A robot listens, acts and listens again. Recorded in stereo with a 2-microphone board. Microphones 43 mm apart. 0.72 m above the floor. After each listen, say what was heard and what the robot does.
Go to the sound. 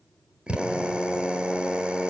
The drill: about 25° right or 155° right. Turn 25° right.
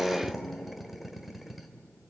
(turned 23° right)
Drive 1.0 m forward.
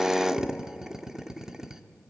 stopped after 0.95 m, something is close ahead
The drill is now 15° right. Turn 15° right.
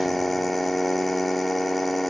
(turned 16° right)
I am next to the drill.